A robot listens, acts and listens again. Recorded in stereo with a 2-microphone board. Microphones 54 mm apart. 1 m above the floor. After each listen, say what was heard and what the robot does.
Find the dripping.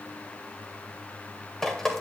Turn 30° left.
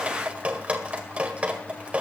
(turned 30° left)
So it is at 20° right. Turn 20° right.
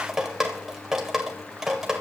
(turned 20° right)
Facing the dripping, 1 to 2 m away.